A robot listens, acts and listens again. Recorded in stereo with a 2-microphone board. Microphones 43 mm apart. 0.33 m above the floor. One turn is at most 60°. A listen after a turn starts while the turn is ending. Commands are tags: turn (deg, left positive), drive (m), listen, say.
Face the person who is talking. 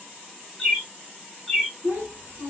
<turn deg="-50"/>
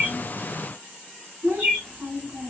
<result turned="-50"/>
<turn deg="-60"/>
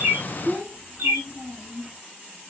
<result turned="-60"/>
<turn deg="-25"/>
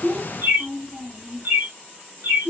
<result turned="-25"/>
<say>Found it: a child speaking, straight ahead, 2 to 4 m away.</say>